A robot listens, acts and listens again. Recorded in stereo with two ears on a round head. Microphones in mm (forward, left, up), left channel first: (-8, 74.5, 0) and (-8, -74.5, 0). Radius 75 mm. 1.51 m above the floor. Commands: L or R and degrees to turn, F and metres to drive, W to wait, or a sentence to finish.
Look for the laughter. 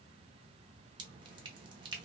W
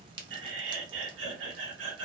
R90
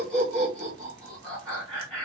Found it: laughter, straight ahead, 1 to 2 m away.